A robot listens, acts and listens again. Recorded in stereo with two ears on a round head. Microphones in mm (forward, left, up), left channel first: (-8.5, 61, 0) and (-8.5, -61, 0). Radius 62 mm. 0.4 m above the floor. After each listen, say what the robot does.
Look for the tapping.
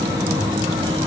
Keep listening.
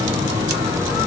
Keep listening.
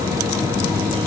I can't make out tapping to turn to.